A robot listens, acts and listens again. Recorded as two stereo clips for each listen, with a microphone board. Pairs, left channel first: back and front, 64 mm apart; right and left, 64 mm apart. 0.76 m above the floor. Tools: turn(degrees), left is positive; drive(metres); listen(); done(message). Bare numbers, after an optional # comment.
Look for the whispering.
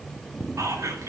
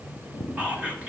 # The whispering: 25° left.
turn(25)
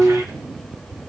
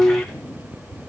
listen()
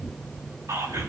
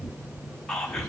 # The whispering is now 10° right.
turn(-10)
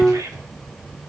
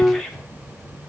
done("Facing the whispering.")